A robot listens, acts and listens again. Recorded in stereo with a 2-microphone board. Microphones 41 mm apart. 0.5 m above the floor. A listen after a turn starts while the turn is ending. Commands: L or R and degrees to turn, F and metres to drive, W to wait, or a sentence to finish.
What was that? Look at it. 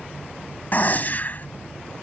L45
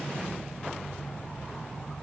W
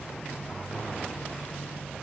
I heard a gunshot, but can't make it out now. It was about straight ahead or 90° left.